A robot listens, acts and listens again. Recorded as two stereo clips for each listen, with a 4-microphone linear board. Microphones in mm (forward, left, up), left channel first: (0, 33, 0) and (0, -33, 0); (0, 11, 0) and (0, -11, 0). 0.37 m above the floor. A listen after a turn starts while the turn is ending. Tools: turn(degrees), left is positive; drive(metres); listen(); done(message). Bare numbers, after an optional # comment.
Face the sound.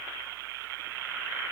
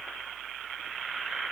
listen()
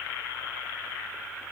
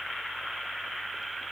listen()
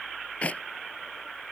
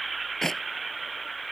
# The clap: about 20° left or 160° left.
turn(20)
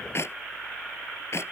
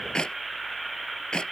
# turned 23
# So it is at 135° left.
turn(135)
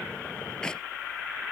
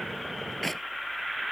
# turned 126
# The clap is now 10° left.
turn(10)
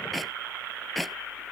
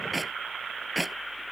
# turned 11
done("Facing the clap.")